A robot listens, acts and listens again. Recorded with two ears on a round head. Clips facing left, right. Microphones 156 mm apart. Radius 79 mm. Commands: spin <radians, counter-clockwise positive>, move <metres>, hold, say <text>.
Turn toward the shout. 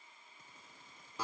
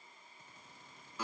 hold
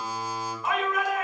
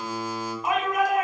spin -0.52
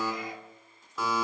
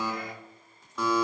hold
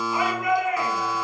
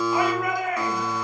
spin -2.44
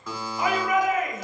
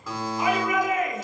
spin 0.79
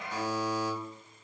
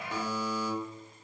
spin -0.17
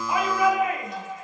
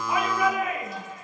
say Found it: a shout, straight ahead, 1 to 2 m away.